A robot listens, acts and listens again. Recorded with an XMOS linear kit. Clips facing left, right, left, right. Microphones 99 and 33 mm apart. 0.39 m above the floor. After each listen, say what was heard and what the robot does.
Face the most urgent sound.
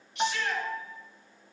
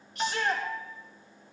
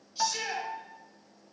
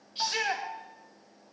The shout: about 45° right or 135° right. Turn 45° right.
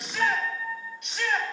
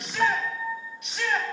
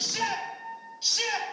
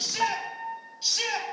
Found it: a shout, straight ahead, over 4 m away.